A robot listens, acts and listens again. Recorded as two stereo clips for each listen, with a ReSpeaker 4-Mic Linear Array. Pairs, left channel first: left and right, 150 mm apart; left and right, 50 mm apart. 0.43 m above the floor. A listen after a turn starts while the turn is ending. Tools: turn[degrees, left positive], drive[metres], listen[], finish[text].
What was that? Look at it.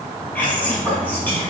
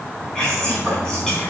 Action: turn[30]
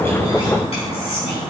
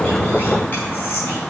Thought: So it is at 135° left.
Action: turn[135]
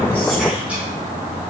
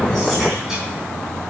Action: listen[]
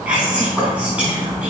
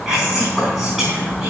Thought: The whispering is now 10° right.
Action: turn[-10]
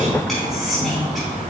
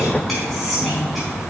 Action: finish[Found it: whispering, straight ahead, 2 to 4 m away.]